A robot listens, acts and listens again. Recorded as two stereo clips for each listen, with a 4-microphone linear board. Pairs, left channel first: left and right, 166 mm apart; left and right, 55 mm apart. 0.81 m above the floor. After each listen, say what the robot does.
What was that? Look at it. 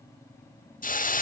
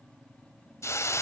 Turn 55° left.
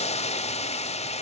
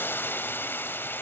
Turn 50° left.
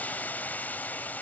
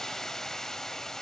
Turn 10° left.
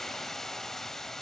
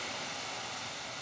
Found it: a hiss, straight ahead, under 1 m away.